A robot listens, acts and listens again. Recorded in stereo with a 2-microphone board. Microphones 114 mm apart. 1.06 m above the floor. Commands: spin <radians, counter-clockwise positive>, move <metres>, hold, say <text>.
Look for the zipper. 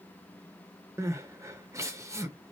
hold
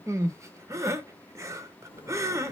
spin 0.87
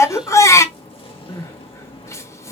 spin 1.22
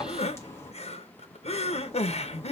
spin 0.44
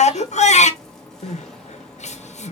say Found it: a zipper, straight ahead.